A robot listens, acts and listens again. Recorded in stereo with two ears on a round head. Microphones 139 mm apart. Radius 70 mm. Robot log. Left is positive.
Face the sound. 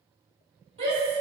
note: The shout: about 40° right or 140° right.
cmd yaw -40
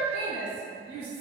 note: So it is at 90° right.
cmd yaw -90
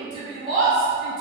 note: The shout is now 35° right.
cmd yaw -35
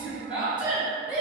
end: Found it: a shout, straight ahead.